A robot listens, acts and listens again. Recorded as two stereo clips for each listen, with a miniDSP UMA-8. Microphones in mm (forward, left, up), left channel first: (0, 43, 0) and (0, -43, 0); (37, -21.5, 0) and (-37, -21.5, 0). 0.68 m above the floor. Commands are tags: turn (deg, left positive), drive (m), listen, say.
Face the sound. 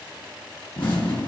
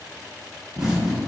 <turn deg="100"/>
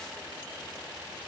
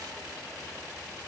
<say>I heard an explosion from this way, but can't make it out now.</say>